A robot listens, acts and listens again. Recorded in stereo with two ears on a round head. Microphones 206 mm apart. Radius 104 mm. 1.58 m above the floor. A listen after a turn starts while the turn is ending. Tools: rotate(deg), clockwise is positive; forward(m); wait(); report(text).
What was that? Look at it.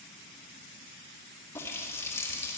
rotate(-30)
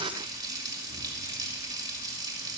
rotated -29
rotate(15)
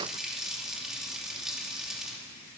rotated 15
report("Facing the running tap.")